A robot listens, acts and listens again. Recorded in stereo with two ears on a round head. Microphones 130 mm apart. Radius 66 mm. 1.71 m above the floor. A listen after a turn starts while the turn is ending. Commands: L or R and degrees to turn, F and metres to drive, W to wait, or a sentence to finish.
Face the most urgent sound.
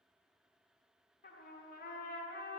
W
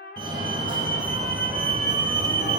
R30
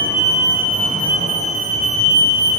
R115
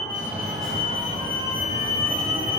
Found it: a fire alarm, straight ahead.